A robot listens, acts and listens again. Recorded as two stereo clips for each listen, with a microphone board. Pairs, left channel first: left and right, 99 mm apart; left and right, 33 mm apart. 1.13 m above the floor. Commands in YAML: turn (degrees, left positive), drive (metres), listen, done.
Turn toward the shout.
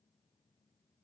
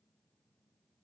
listen: true
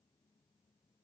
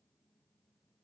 listen: true
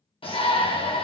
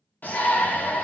turn: 65
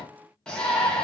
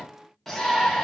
turn: 10
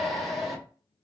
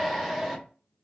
done: "Facing the shout, 1 to 2 m away."